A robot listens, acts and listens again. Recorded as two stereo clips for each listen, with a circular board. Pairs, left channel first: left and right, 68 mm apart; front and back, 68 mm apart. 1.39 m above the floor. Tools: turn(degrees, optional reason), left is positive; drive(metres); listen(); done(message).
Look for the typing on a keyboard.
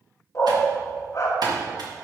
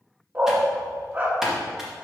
turn(degrees=-95, reason="The typing on a keyboard: 95° right.")
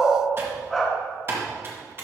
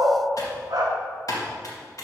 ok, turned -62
turn(degrees=-35, reason="The typing on a keyboard is now 35° right.")
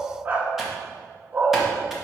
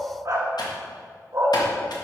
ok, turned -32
listen()
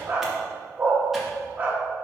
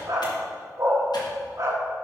listen()
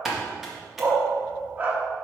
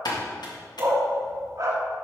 done("Facing the typing on a keyboard.")